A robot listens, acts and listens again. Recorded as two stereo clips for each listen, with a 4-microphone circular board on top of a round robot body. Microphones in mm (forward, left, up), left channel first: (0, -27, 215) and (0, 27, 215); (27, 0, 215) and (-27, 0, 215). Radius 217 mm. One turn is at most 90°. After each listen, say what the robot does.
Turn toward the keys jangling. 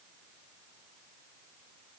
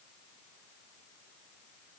Keep listening.
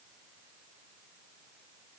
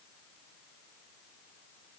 Keep listening.
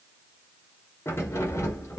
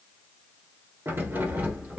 Turn 90° right.
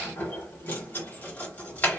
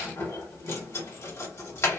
Turn 30° right.
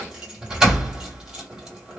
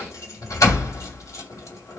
Turn 15° left.
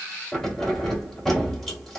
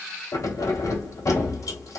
Found it: keys jangling, straight ahead, 1 to 2 m away.